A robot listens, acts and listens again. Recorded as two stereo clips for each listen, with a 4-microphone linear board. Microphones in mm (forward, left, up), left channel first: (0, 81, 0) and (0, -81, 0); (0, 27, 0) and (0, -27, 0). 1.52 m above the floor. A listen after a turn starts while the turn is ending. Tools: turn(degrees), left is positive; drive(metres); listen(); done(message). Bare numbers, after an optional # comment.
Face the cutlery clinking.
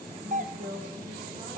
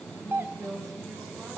listen()
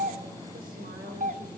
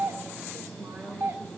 listen()
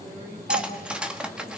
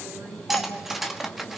turn(-30)
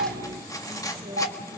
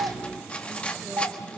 # So it is at 20° left.
turn(20)
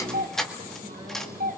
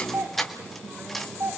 done("Facing the cutlery clinking.")